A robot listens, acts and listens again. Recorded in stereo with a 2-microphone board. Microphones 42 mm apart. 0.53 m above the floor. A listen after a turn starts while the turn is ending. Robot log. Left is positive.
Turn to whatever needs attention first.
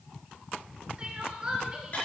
note: The crying: about 20° right or 160° right.
cmd yaw -20
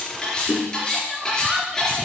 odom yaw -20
end: Found it: crying, straight ahead.